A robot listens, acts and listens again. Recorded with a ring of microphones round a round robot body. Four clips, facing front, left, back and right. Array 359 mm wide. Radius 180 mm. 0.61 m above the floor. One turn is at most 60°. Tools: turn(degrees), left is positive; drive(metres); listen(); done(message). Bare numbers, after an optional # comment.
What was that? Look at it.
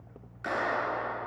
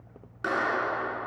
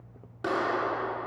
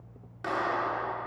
# The clap: 155° left.
turn(60)
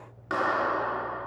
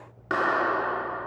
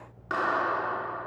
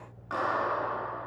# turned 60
# The clap is now 95° left.
turn(60)
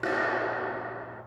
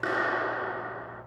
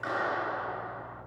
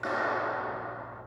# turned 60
# The clap is now 35° left.
turn(35)
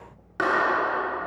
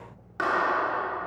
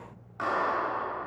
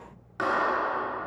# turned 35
done("Facing the clap.")